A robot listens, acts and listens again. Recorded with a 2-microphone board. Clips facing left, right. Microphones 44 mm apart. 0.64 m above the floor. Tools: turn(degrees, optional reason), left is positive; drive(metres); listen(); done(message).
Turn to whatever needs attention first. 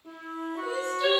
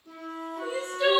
turn(degrees=-40, reason="The crying: about 40° right or 140° right.")
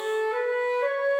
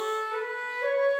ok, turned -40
listen()
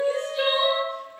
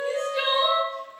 turn(degrees=-100, reason="So it is at 100° right.")
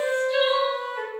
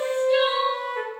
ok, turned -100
turn(degrees=-20, reason="The crying is now 20° right.")
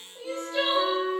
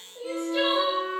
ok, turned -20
done("Found it: crying, straight ahead.")